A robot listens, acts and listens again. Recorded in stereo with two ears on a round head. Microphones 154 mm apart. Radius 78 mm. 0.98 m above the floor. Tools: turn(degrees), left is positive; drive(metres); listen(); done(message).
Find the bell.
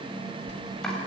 turn(degrees=45)
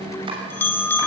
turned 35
turn(degrees=10)
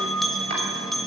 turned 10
done("Found it: a bell, straight ahead, 2 to 4 m away.")